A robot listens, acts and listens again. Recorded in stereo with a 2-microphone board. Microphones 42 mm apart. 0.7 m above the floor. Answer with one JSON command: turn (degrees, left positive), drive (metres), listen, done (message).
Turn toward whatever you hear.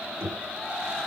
{"turn": -60}
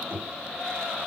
{"turn": -60}
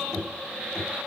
{"done": "Found it: knocking, straight ahead, over 4 m away."}